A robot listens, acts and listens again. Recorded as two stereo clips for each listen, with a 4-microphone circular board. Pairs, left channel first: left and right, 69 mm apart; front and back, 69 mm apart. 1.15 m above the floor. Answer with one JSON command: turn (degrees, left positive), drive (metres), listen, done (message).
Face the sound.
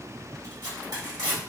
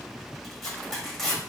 {"turn": -85}
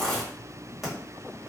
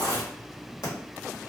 {"done": "Facing the tearing paper, 1 to 2 m away."}